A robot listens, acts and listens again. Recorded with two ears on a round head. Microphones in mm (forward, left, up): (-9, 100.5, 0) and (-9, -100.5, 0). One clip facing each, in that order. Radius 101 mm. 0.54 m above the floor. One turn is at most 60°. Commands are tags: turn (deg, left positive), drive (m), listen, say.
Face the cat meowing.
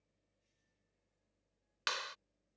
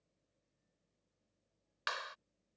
<listen/>
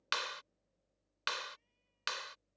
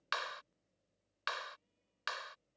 <listen/>
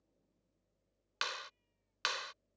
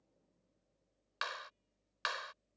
<say>I can't make out a cat meowing, only a clap.</say>